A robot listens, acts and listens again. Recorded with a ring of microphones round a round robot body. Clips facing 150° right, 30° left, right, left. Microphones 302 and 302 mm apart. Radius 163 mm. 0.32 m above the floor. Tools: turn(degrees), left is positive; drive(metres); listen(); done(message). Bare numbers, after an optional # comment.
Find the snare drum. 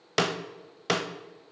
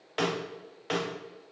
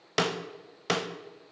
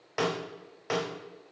# The snare drum: 125° right.
turn(-125)
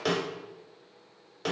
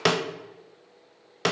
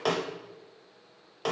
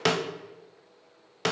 # The snare drum is now 40° left.
turn(40)
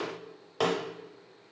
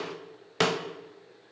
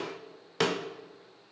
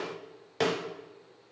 # The snare drum is now 20° right.
turn(-20)
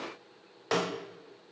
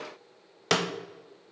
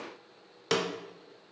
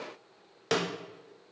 # The snare drum is now 10° right.
turn(-10)
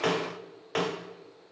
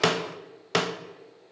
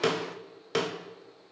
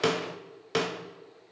done("Facing the snare drum.")